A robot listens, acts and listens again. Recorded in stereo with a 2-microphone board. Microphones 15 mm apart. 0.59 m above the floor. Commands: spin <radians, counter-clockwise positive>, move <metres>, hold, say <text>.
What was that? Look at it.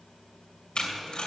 spin 1.13
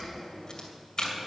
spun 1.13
spin 0.70
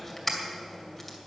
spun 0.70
spin 0.17
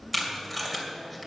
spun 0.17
say Facing the tape being pulled, 2 to 4 m away.